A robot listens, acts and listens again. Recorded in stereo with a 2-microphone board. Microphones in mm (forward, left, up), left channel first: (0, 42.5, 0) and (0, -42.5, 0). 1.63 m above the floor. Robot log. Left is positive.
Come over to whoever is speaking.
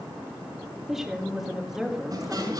cmd yaw -30
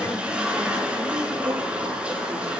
cmd idle
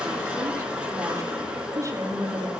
note: So it is at 145° right.
cmd yaw -145
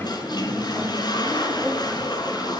cmd idle
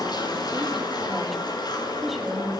cmd fwd 1.0
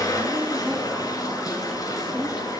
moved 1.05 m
cmd idle
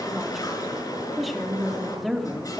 cmd fwd 1.0
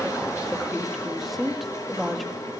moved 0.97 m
cmd fwd 1.0
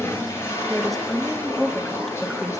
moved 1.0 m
cmd fwd 1.0
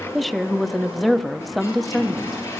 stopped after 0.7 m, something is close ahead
end: Arrived at the woman speaking, straight ahead.